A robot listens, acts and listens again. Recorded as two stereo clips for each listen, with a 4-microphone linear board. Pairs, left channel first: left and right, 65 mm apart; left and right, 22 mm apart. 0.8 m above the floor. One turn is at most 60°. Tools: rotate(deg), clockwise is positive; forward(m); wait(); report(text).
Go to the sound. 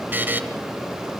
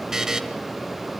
rotate(30)
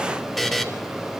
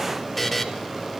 forward(1.0)
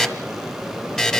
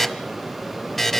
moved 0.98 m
rotate(-10)
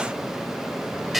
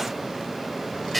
forward(1.0)
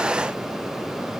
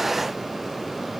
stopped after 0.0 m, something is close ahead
wait()
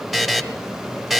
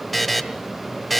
report("I am next to the buzzer.")